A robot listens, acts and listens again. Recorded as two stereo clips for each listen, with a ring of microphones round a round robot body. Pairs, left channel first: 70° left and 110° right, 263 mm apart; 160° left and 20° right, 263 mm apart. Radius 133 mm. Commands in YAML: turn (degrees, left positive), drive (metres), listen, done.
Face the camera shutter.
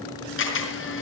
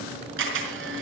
turn: 25
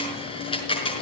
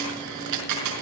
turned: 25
done: "Facing the camera shutter, over 4 m away."